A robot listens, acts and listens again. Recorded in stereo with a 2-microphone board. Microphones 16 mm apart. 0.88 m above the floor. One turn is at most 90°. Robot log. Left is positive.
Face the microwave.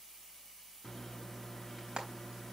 note: The microwave: about 25° left or 155° left.
cmd yaw +25
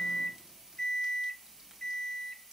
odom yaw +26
note: So it is at 125° left.
cmd yaw +90
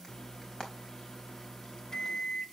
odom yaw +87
note: The microwave is now 40° left.
cmd yaw +40
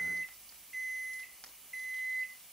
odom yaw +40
end: Found it: a microwave, straight ahead, under 1 m away.